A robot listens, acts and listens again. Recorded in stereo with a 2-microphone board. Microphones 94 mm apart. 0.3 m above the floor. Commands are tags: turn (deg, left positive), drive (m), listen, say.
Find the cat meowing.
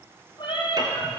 <turn deg="55"/>
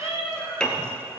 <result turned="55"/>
<turn deg="85"/>
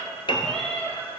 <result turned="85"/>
<turn deg="10"/>
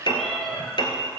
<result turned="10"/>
<say>Facing the cat meowing.</say>